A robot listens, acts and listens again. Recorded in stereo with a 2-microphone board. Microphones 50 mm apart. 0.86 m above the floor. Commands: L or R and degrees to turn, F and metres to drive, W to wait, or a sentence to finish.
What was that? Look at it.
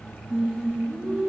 R20
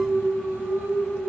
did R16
R35
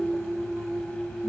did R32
R110
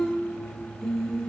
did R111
L10
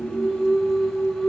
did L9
Found it: singing, straight ahead, 2 to 4 m away.